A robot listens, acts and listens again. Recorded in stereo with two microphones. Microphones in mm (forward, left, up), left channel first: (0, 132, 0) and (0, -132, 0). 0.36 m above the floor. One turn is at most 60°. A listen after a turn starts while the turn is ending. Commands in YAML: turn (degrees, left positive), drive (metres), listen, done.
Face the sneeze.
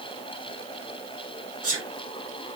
turn: -60
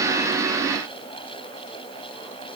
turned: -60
listen: true
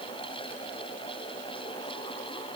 done: "I heard a sneeze, but can't make it out now. It was about straight ahead or 60° right."